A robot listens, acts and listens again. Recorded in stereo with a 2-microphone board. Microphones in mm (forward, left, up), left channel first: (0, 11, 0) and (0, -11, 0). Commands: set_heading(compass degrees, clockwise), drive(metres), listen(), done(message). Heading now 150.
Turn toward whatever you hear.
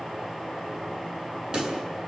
set_heading(185)
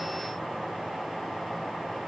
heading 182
listen()
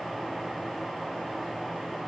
done("I heard a pop, but can't make it out now. It was about 5° right or 110° right.")